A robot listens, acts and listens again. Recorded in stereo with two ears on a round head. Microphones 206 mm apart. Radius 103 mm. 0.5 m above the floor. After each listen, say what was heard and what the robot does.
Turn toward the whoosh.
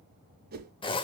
The whoosh: about 45° right or 135° right. Turn 45° right.
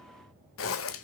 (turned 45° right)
Keep listening.
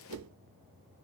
So it is at 90° right. Turn 90° right.
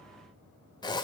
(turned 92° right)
Keep listening.
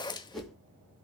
Facing the whoosh, 2 to 4 m away.